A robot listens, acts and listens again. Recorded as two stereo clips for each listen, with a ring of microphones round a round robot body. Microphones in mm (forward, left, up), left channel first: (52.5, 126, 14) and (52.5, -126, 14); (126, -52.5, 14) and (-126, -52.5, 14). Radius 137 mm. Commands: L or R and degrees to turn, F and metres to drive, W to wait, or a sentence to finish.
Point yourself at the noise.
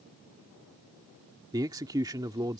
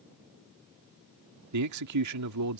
R165
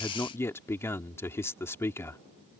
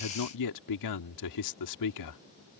L10
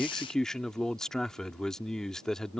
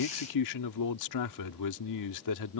Facing the man speaking.